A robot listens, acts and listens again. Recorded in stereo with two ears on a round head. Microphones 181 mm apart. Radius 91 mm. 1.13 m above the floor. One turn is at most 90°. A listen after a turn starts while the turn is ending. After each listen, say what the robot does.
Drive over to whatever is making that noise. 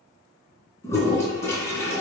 Turn 30° left.
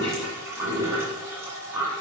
Turn 15° right.
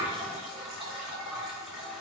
Drive 1.0 m forward.
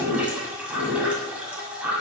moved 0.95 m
Turn 10° right.
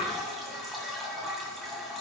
Drive 1.0 m forward.
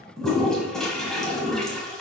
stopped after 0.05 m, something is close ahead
I am next to the toilet flushing.